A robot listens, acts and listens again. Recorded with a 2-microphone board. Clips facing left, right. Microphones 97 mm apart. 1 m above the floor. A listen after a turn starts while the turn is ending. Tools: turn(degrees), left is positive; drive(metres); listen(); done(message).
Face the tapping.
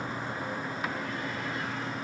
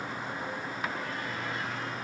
listen()
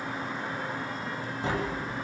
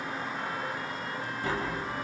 turn(degrees=20)
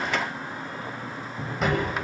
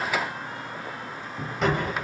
done("Found it: tapping, straight ahead, over 4 m away.")